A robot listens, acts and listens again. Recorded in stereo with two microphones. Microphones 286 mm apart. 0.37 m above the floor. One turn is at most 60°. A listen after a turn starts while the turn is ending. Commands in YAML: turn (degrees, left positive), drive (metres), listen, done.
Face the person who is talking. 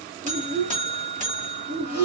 turn: -45
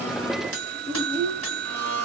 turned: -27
turn: -25
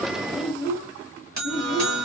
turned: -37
turn: 15
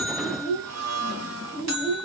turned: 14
done: "Found it: a child speaking, straight ahead."